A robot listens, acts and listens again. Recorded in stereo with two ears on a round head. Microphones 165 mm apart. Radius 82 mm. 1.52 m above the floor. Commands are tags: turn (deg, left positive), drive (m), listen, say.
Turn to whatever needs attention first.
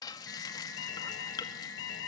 <turn deg="70"/>
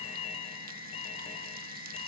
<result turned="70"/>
<turn deg="35"/>
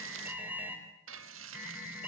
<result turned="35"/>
<turn deg="-10"/>
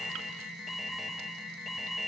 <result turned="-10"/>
<say>Found it: an alarm, straight ahead.</say>